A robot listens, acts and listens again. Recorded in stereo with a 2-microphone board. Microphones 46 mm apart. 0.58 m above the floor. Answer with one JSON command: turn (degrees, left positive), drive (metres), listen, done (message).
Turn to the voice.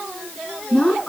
{"turn": 25}
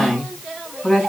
{"done": "Found it: a woman speaking, straight ahead."}